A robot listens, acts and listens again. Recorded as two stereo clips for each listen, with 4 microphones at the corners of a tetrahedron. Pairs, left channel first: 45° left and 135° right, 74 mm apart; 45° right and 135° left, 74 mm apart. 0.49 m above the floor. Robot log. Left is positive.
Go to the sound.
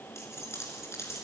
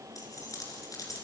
cmd fwd 1.0
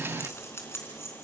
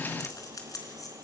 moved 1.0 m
note: The keys jangling is now 10° right.
cmd yaw -10
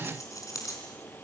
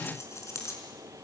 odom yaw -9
cmd fwd 1.0
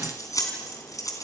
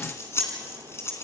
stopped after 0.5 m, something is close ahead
end: Blocked. The keys jangling is further on, straight ahead.